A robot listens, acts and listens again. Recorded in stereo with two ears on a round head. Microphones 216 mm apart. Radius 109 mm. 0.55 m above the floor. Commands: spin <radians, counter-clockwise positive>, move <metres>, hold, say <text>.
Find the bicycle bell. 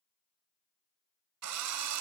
hold
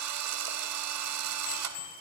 spin 1.22
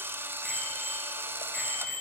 say Facing the bicycle bell, over 4 m away.